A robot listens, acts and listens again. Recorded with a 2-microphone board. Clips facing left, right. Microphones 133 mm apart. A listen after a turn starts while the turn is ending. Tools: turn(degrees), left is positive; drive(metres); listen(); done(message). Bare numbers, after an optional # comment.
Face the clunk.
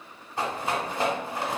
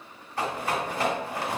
listen()
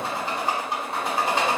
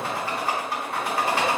listen()
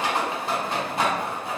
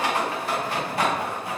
done("I can't make out a clunk to turn to.")